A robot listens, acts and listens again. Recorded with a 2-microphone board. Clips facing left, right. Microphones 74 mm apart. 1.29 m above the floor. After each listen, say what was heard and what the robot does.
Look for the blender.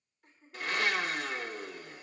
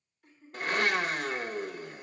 The blender: about 45° right or 135° right. Turn 45° right.
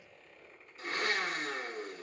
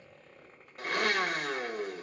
So it is at 85° right. Turn 85° right.
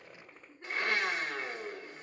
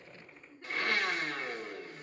The blender is now 25° left. Turn 25° left.
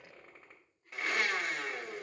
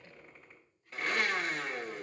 Facing the blender.